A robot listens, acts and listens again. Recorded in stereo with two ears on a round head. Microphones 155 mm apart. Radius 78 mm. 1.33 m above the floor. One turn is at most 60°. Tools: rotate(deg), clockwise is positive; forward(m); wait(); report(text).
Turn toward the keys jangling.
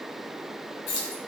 rotate(-60)
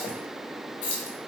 rotate(-45)
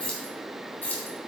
rotate(-10)
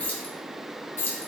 rotate(-15)
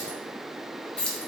report("Facing the keys jangling, 1 to 2 m away.")